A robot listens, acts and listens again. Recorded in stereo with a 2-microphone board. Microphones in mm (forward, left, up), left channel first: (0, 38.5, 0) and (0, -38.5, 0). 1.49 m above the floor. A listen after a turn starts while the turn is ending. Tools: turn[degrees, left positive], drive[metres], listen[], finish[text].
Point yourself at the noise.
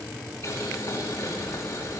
Thought: The boiling: about 40° left or 140° left.
Action: turn[40]
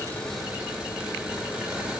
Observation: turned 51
Thought: So it is at 10° right.
Action: turn[-10]
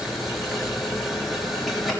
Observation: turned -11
Action: finish[Found it: boiling, straight ahead.]